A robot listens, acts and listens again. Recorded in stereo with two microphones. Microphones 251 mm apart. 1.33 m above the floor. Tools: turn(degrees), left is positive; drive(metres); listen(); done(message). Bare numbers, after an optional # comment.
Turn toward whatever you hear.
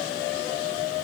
listen()
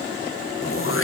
# The throat clearing: about 55° left or 125° left.
turn(55)
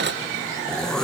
done("Facing the throat clearing, under 1 m away.")